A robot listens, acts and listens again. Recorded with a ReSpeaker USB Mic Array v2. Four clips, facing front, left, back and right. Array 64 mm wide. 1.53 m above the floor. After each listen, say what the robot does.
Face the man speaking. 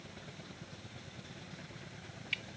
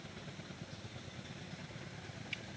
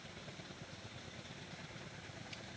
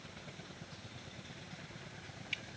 Keep listening.
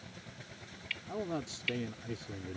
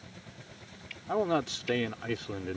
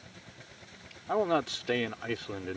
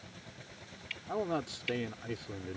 Turn 150° left.
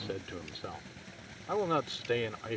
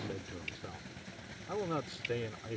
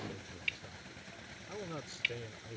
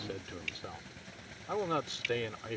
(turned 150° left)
Turn 20° right.
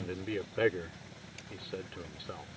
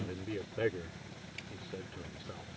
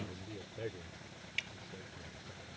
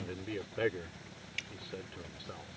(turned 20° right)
Turn 10° right.
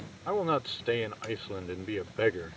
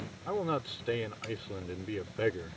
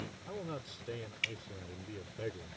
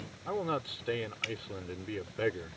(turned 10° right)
Facing the man speaking.